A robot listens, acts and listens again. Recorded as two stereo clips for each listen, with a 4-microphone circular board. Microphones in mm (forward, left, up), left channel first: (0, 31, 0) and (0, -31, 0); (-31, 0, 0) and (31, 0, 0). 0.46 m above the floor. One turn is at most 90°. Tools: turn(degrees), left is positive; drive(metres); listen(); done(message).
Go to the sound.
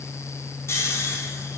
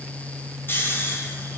turn(degrees=90)
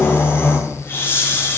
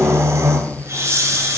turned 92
turn(degrees=40)
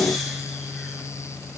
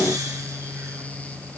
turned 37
listen()
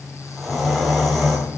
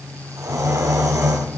drive(metres=1.0)
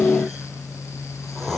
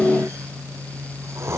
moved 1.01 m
drive(metres=1.0)
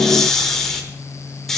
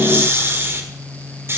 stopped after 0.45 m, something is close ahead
turn(degrees=10)
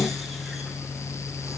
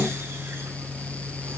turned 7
listen()
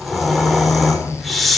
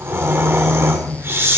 done("Arrived at the snoring, straight ahead.")